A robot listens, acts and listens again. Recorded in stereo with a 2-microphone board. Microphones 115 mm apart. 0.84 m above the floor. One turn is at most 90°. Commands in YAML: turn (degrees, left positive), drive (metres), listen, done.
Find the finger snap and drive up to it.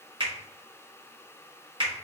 turn: -50
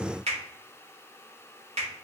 turn: -80
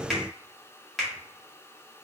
drive: 1.0
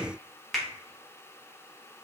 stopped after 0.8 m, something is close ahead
done: "I am next to the finger snap."